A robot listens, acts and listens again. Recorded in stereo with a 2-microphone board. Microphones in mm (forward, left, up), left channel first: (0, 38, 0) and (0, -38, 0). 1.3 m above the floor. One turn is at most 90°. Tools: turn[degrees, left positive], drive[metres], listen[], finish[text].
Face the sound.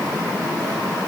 Action: listen[]
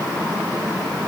Action: listen[]
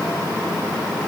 Action: finish[I can't make out anything to turn to.]